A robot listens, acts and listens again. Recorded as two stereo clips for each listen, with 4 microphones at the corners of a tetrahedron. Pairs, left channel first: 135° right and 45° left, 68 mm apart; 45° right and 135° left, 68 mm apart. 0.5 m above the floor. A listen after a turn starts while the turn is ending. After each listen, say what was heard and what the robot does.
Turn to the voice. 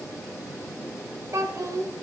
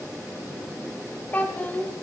The child speaking: 20° left. Turn 20° left.
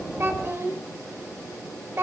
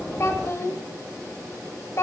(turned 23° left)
Found it: a child speaking, straight ahead, 1 to 2 m away.